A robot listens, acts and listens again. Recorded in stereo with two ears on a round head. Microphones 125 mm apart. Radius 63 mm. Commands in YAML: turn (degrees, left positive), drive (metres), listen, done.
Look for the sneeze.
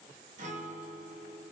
listen: true
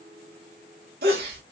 turn: -90
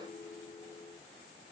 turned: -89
done: "I heard a sneeze from this way, but can't make it out now."